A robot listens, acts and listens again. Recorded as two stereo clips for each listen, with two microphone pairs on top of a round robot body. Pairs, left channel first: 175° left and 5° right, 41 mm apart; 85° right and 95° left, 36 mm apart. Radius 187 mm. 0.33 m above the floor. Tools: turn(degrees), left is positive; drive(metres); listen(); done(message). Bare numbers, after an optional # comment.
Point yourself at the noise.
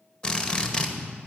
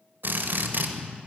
# The drill: 110° left.
turn(110)
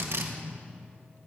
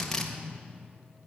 # The drill is now 10° right.
turn(-10)
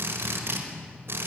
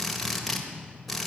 done("Found it: a drill, straight ahead.")